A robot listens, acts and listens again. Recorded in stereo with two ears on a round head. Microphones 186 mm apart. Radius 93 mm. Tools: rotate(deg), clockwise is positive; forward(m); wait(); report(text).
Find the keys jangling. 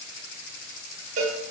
wait()
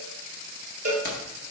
rotate(-45)
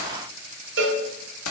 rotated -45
rotate(-90)
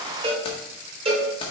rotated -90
rotate(-25)
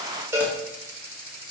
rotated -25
wait()
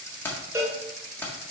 rotate(-10)
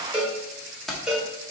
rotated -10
report("Facing the keys jangling.")